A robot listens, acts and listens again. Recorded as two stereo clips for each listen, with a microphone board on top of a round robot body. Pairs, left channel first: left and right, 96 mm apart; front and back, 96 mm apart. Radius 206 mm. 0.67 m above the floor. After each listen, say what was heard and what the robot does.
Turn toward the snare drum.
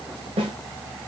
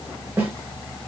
The snare drum: 110° right. Turn 110° right.
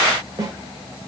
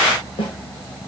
The snare drum is now 35° right. Turn 35° right.
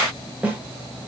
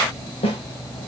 The snare drum is now 15° right. Turn 15° right.
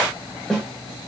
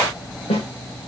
Found it: a snare drum, straight ahead.